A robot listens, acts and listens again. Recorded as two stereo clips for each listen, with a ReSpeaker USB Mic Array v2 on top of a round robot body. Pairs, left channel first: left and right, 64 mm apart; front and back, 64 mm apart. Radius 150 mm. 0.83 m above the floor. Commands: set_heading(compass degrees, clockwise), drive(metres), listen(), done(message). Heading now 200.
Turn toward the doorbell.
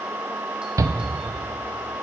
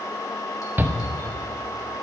listen()
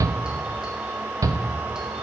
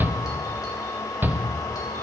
listen()
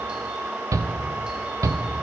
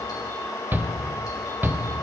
done("I can't make out a doorbell to turn to.")